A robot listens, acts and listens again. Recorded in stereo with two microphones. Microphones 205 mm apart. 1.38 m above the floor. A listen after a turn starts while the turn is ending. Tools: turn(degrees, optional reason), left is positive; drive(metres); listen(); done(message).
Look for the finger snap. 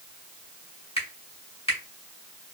turn(degrees=30, reason="The finger snap: about 30° left or 150° left.")
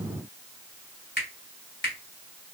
turn(degrees=120, reason="So it is at 120° left.")
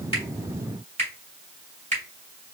turn(degrees=-35, reason="The finger snap is now 35° right.")
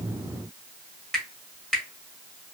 done("Found it: a finger snap, straight ahead, 2 to 4 m away.")